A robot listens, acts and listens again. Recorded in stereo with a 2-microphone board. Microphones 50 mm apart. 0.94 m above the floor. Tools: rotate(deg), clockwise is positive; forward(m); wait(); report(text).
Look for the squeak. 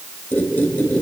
rotate(-35)
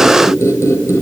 rotate(-105)
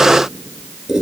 rotate(10)
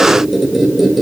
report("Found it: a squeak, straight ahead.")